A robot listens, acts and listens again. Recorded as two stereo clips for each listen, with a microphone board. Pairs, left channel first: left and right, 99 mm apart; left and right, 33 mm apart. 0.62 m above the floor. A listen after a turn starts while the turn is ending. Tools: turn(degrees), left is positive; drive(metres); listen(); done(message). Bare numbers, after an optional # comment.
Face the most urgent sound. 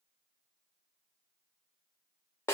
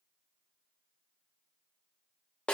listen()
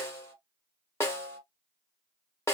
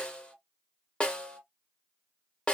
listen()
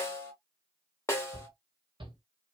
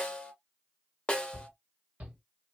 # The shout: about 55° right or 125° right.
turn(-55)
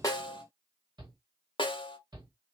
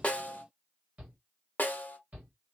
# So it is at 60° right.
turn(-60)
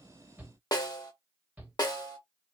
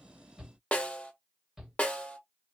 # The shout is now 15° right.
turn(-15)
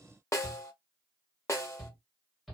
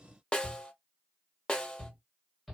done("Facing the shout.")